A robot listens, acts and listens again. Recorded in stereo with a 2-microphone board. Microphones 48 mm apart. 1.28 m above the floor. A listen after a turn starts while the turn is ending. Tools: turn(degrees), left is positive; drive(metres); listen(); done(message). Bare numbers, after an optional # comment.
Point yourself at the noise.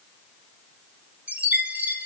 # The chime: about 30° right or 150° right.
turn(-30)
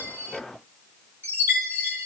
# So it is at 120° right.
turn(-120)
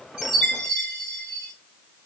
done("Found it: a chime, straight ahead.")